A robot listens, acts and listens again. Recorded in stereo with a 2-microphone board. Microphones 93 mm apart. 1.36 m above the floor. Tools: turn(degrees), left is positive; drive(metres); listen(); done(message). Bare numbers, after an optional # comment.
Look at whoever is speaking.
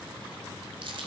listen()
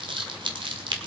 listen()
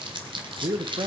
# The man speaking: about 60° right or 120° right.
turn(-60)
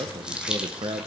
# So it is at 55° right.
turn(-55)
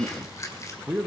# The man speaking is now 10° right.
turn(-10)
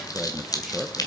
done("Facing the man speaking.")